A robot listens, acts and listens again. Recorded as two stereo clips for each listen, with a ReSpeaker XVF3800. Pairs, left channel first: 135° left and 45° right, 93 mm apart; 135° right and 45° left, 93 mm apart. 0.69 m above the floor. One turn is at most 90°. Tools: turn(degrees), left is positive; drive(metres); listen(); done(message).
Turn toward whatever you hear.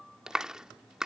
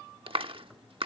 turn(degrees=35)
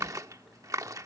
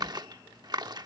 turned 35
done("Found it: a clap, straight ahead.")